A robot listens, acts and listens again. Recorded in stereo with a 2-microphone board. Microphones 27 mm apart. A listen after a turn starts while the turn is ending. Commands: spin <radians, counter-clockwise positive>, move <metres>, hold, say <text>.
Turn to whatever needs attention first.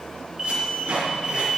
spin -0.44
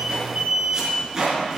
spin -2.27
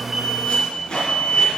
spin 0.61
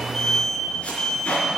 spin 0.35
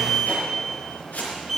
say Facing the alarm.